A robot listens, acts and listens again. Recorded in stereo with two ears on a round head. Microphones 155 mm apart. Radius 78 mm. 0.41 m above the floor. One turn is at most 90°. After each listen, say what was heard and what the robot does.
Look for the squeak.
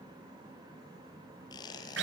The squeak: about 25° left or 155° left. Turn 25° left.
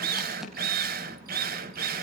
Keep listening.
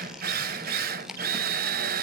Facing the squeak.